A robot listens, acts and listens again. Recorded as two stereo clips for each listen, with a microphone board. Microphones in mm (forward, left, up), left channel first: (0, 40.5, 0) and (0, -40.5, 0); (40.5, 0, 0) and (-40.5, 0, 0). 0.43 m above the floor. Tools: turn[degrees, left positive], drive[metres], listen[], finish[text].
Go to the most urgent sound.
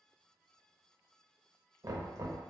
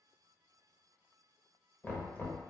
Action: listen[]
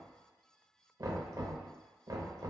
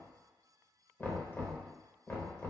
Action: listen[]
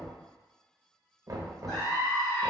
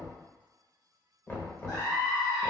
Action: drive[1.0]
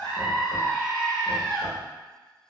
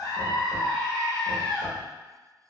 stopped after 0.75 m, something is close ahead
Thought: The scream is now 10° left.
Action: turn[10]
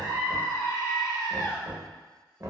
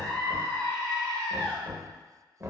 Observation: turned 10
Action: finish[Arrived at the scream, straight ahead.]